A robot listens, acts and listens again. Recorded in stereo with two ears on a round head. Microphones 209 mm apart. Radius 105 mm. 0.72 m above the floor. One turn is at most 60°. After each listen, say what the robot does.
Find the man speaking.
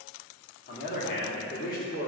Turn 40° left.
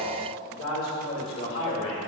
Turn 60° left.
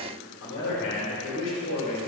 Turn 55° left.
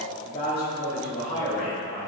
Turn 25° left.
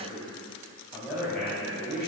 Found it: a man speaking, straight ahead, 2 to 4 m away.